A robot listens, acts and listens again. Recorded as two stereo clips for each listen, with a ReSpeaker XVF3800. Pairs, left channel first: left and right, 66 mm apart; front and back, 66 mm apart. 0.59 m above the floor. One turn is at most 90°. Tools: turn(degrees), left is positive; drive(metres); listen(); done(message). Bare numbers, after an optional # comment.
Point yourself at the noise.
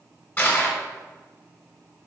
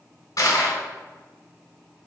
# The crushing: 30° left.
turn(30)
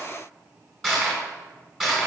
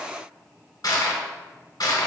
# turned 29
done("Found it: crushing, straight ahead.")